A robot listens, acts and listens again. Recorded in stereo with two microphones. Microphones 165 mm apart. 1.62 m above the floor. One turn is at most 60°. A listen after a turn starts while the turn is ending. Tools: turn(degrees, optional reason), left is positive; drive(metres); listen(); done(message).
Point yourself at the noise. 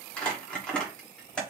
turn(degrees=30)
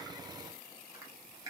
listen()
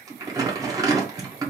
turn(degrees=-20, reason="So it is at 20° right.")
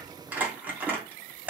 turn(degrees=-10, reason="The crumpling is now 10° right.")
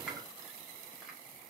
listen()
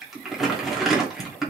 done("Found it: crumpling, straight ahead, 1 to 2 m away.")